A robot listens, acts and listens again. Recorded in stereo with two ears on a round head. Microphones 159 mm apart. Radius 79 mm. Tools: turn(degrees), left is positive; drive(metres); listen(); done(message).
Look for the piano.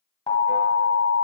listen()
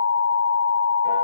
listen()
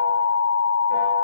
done("I can't make out a piano, only an alarm.")